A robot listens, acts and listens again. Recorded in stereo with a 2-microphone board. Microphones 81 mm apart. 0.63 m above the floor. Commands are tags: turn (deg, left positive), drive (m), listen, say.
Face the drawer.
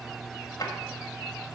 <turn deg="50"/>
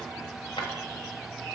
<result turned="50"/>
<turn deg="80"/>
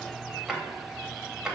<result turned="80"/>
<say>Facing the drawer.</say>